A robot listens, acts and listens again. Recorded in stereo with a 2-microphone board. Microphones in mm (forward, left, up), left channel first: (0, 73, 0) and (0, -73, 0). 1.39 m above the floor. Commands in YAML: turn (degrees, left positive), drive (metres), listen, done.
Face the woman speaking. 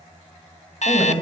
turn: -30
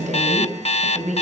turn: -120
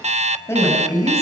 turn: 20
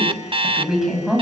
done: "Found it: a woman speaking, straight ahead."